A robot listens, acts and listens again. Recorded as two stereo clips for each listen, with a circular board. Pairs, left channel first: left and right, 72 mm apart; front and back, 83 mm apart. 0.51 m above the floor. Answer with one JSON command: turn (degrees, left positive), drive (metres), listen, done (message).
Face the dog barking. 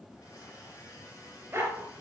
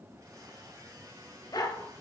{"turn": -30}
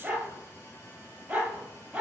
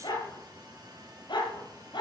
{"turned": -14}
{"turn": -10}
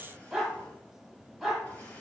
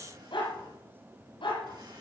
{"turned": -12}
{"done": "Found it: a dog barking, straight ahead, over 4 m away."}